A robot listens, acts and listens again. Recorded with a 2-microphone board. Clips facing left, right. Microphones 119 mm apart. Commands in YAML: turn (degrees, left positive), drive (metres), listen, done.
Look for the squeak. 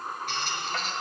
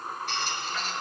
turn: 50
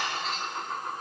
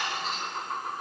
listen: true
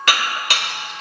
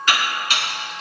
listen: true
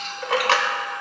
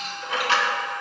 done: "I heard a squeak, but can't make it out now. It was about straight ahead or 80° left."